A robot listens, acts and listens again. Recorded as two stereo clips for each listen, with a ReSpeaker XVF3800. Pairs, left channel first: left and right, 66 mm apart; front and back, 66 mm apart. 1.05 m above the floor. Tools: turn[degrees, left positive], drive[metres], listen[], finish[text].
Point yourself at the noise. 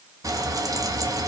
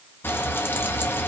Thought: The frying: 55° right.
Action: turn[-55]
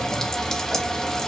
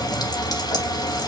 Thought: The frying is now 10° left.
Action: turn[10]
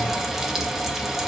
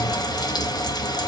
Action: finish[Found it: frying, straight ahead.]